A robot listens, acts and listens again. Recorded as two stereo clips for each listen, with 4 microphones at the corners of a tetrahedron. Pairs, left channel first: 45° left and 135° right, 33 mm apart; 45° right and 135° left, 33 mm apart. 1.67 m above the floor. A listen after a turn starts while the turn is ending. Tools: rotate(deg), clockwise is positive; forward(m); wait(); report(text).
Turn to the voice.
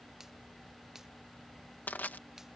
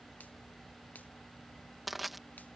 wait()
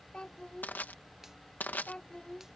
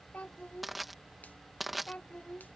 rotate(10)
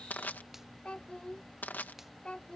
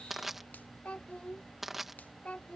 report("Facing the child speaking.")